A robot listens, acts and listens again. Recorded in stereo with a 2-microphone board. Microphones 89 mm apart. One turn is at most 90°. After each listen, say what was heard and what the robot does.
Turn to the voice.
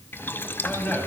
The man speaking: about 20° left or 160° left. Turn 20° left.
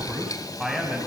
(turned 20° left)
Found it: a man speaking, straight ahead.